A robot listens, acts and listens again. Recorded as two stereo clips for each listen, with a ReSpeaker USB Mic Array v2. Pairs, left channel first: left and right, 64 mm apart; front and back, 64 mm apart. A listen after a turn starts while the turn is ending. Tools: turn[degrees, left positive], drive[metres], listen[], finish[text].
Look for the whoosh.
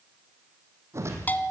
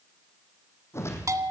Thought: The whoosh: 45° right.
Action: turn[-45]
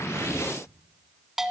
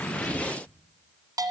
Action: listen[]
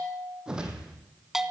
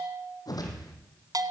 Thought: The whoosh is now 10° right.
Action: turn[-10]
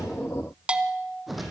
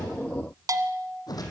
Action: finish[Found it: a whoosh, straight ahead.]